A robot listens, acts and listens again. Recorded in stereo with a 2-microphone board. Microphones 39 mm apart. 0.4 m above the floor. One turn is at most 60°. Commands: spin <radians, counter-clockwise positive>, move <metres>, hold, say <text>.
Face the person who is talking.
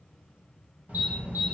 spin -0.79
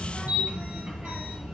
say Facing the child speaking.